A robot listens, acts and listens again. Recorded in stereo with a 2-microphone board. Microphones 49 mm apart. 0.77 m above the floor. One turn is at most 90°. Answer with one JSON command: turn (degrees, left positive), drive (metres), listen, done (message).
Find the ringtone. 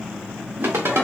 {"turn": -60}
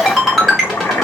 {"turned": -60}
{"done": "Found it: a ringtone, straight ahead, 1 to 2 m away."}